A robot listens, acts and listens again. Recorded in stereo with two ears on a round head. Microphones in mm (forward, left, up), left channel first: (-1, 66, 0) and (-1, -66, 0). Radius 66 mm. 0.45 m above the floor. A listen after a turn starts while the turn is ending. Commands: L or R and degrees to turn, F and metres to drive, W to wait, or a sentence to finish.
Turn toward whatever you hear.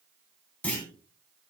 L30
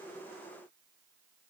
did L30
W
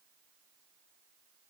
I heard a clunk, but can't make it out now. It was about 20° right or 140° left.